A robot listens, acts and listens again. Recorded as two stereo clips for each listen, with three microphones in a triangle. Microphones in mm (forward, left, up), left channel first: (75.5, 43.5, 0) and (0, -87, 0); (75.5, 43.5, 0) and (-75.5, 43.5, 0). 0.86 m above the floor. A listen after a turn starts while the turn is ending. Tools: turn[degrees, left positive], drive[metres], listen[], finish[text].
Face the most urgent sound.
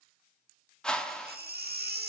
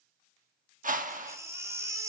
Thought: The baby crying: 110° right.
Action: turn[-110]
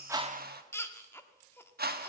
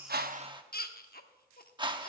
Thought: The baby crying is now 15° right.
Action: turn[-15]
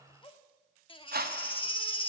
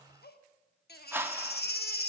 Action: finish[Facing the baby crying, 1 to 2 m away.]